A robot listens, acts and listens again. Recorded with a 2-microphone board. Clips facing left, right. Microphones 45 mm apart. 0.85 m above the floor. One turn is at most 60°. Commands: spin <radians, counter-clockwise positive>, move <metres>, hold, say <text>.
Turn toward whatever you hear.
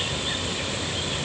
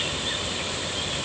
hold
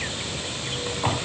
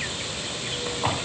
hold
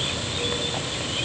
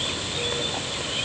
say I can't make out anything.